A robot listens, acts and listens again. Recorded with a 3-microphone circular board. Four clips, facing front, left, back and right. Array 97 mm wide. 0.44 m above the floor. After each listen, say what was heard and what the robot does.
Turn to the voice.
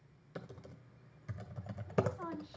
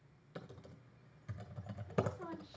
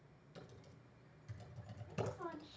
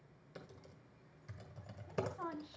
The woman speaking: 75° right. Turn 75° right.
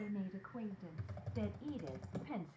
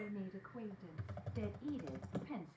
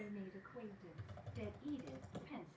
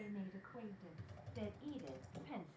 The woman speaking is now 15° right. Turn 15° right.
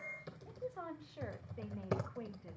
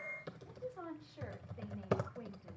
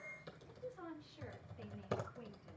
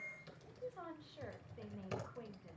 The woman speaking is now 10° right. Turn 10° right.
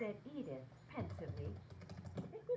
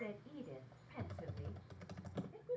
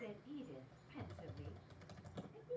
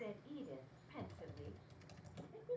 Found it: a woman speaking, straight ahead, 1 to 2 m away.